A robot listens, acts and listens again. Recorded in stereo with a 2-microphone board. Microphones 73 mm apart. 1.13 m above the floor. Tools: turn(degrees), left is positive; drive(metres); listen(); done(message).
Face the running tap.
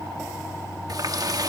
turn(degrees=-60)
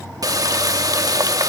turn(degrees=-60)
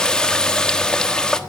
turn(degrees=10)
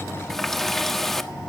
done("Facing the running tap.")